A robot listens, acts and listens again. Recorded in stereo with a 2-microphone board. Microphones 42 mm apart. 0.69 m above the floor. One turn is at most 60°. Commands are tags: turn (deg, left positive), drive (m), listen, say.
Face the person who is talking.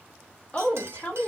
<turn deg="35"/>
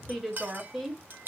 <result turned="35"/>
<say>Facing the woman speaking, 1 to 2 m away.</say>